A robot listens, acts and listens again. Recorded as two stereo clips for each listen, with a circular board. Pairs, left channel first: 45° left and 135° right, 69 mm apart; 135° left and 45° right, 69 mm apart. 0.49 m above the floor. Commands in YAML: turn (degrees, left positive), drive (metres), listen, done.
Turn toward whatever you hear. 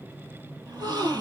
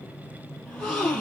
turn: -150
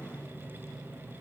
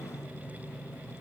done: "Facing where the gasp came from. I can't hear it now."